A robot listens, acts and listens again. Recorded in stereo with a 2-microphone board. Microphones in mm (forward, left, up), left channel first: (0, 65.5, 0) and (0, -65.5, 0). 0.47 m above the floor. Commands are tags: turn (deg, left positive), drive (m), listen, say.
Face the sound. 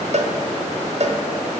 <turn deg="-60"/>
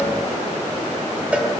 <turn deg="-10"/>
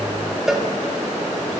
<say>Facing the cowbell.</say>